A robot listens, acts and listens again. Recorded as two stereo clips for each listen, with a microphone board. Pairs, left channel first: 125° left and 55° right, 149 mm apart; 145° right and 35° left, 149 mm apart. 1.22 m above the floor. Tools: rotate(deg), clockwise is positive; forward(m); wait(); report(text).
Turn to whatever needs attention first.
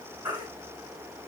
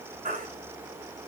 report("Facing the baby crying.")